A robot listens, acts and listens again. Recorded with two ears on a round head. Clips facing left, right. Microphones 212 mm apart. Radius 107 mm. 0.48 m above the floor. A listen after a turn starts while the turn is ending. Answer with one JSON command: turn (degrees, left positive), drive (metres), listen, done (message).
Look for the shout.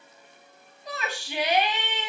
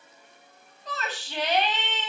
{"turn": 30}
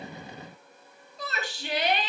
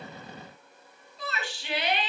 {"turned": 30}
{"turn": 140}
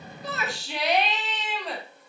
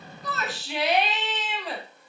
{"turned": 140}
{"done": "Found it: a shout, straight ahead."}